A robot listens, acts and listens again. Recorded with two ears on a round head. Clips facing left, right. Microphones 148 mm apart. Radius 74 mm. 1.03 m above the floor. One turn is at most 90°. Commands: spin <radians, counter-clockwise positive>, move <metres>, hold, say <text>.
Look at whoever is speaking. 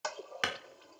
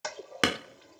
hold
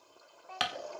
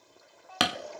spin 1.05
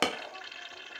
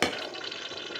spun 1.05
hold
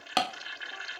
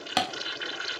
hold
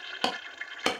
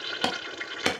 say I heard a child speaking, but can't make it out now. It was about straight ahead or 60° left.